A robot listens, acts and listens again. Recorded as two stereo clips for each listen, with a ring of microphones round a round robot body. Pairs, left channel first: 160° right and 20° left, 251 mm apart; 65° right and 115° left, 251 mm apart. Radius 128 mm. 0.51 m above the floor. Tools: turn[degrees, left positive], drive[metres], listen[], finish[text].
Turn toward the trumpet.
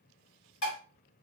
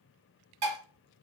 Action: listen[]
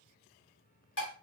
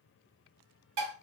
Action: listen[]
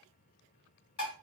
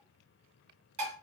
Action: finish[I can't make out a trumpet to turn to.]